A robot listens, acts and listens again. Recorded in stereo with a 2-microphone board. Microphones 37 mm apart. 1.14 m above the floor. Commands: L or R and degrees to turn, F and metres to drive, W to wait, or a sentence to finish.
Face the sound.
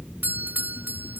R60
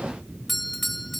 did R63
Facing the doorbell.